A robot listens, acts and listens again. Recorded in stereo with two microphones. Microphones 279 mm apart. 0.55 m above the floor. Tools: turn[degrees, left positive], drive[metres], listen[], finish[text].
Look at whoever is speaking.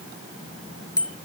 Action: listen[]
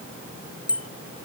Action: listen[]
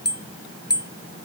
Action: finish[I can't make out anyone speaking to turn to.]